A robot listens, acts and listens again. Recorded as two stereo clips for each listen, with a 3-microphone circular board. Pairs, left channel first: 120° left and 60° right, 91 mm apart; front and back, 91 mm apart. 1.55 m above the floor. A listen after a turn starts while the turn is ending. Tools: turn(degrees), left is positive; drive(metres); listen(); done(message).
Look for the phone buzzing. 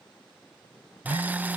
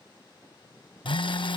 turn(degrees=50)
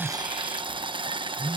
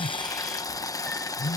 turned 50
done("Facing the phone buzzing.")